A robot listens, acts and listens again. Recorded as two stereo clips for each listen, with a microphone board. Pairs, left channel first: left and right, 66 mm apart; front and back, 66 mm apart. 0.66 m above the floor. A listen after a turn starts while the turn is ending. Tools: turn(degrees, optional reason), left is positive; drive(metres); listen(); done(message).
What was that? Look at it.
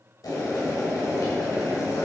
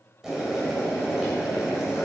turn(degrees=95, reason="The boiling: 95° left.")
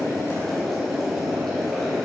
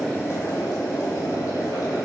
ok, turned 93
done("Found it: boiling, straight ahead.")